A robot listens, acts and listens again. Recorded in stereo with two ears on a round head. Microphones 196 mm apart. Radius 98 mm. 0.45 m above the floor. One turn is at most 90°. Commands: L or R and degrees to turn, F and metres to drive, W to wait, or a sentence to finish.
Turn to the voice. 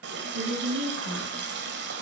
R75
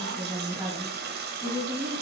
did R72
R15
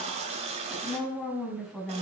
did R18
Facing the woman speaking, 2 to 4 m away.